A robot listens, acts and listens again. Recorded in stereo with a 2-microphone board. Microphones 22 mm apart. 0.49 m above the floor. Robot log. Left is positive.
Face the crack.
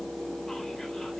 cmd idle
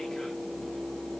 cmd idle
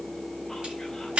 note: The crack: about 70° right or 110° right.
cmd yaw -70
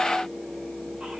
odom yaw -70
cmd idle
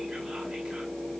end: I heard a crack, but can't make it out now. It was about straight ahead or 40° right.